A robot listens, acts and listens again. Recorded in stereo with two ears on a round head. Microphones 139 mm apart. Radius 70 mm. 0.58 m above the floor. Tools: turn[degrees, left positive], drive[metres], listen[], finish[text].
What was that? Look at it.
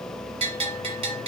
Thought: The bell: about 40° right or 140° right.
Action: turn[-40]
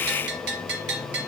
Thought: So it is at 100° right.
Action: turn[-100]
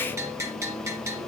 Thought: The bell is now 20° right.
Action: turn[-20]
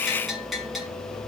Action: finish[Found it: a bell, straight ahead.]